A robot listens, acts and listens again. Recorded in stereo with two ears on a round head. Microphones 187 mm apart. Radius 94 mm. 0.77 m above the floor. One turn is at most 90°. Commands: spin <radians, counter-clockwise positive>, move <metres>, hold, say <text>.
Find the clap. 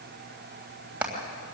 hold
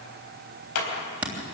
spin 1.57
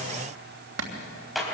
say Found it: a clap, straight ahead, 2 to 4 m away.